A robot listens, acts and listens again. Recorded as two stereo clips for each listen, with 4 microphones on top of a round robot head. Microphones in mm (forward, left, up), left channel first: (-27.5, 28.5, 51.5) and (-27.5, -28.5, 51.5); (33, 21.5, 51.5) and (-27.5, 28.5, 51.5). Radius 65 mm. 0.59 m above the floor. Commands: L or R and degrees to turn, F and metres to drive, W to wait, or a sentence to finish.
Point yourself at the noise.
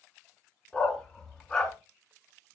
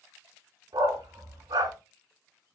L170
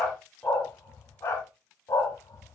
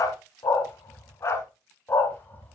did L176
L50
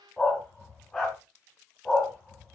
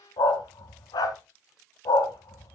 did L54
L10
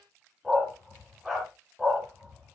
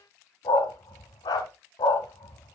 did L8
Found it: a dog barking, straight ahead, 1 to 2 m away.